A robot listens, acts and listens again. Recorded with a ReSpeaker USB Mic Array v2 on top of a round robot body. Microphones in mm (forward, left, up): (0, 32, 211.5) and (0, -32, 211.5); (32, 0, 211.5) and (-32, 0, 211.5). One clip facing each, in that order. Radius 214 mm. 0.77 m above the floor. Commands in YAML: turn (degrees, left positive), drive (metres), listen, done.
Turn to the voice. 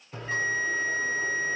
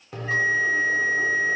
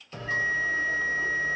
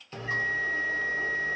listen: true
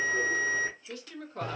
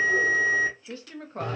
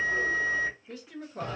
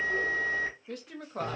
turn: -150
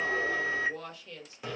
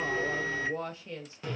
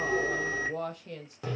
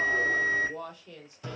turn: -30
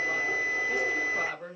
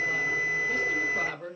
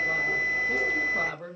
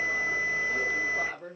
turn: 10
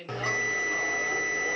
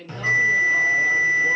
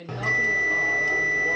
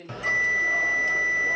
done: "Found it: a woman speaking, straight ahead, under 1 m away."